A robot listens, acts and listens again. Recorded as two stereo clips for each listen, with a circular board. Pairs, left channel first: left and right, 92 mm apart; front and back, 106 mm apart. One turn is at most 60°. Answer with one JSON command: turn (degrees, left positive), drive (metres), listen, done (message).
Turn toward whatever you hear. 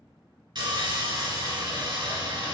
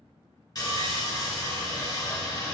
{"turn": -55}
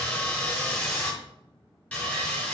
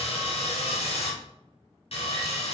{"turn": 10}
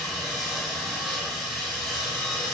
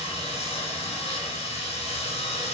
{"done": "Facing the sawing, 2 to 4 m away."}